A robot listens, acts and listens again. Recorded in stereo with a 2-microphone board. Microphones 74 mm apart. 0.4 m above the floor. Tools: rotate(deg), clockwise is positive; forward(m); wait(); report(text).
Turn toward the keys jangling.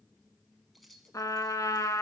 rotate(-30)
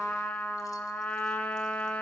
wait()
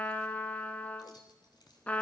rotate(-100)
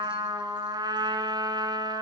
wait()
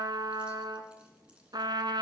wait()
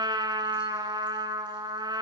report("Facing where the keys jangling came from. I can't hear it now.")